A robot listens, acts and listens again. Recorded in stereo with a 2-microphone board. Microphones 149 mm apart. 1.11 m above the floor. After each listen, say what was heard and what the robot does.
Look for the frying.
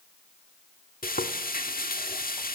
Turn 90° left.
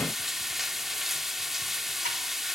Facing the frying.